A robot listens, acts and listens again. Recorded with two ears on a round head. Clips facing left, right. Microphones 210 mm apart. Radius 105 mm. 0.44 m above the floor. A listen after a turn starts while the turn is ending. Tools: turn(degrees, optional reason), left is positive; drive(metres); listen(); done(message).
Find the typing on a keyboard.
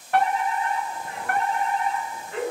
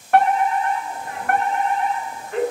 listen()
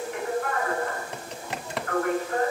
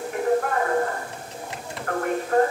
turn(degrees=55, reason="The typing on a keyboard: about 55° left or 125° left.")
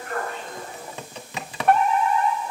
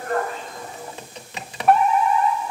turn(degrees=70, reason="So it is at 70° left.")
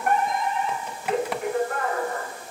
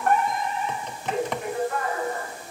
done("Found it: typing on a keyboard, straight ahead.")